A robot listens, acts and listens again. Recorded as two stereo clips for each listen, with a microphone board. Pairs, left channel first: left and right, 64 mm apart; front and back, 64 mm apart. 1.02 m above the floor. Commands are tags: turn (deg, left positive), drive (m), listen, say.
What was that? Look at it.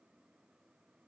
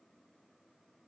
<listen/>
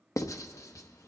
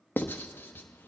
<turn deg="60"/>
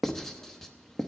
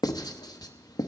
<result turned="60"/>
<say>Facing the writing, under 1 m away.</say>